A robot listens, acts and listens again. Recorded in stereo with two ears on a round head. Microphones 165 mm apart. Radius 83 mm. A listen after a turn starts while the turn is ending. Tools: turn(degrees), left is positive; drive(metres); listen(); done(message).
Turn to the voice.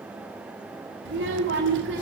turn(degrees=-70)
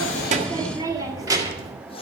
turn(degrees=-20)
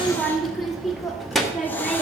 done("Facing the child speaking, 1 to 2 m away.")